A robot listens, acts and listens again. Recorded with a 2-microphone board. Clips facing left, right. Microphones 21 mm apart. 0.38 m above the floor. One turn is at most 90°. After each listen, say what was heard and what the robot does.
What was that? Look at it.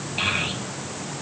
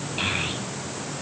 Turn 30° left.
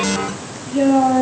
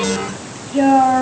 So it is at 35° right. Turn 35° right.
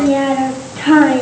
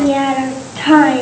The child speaking is now 20° right. Turn 20° right.
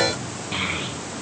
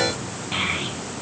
The child speaking is now 10° right. Turn 10° right.
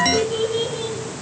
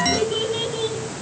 The child speaking is now 10° right. Turn 10° right.
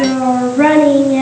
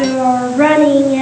Facing the child speaking, 2 to 4 m away.